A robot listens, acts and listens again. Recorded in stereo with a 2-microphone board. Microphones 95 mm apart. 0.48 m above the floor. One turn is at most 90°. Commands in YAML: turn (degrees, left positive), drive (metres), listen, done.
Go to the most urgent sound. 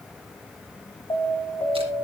turn: 45
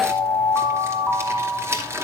drive: 1.0
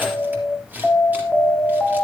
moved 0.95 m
drive: 1.0
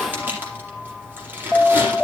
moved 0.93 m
drive: 1.0
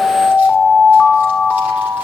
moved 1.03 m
drive: 1.0
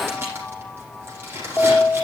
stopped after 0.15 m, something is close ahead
turn: 10
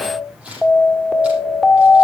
done: "I am next to the alarm."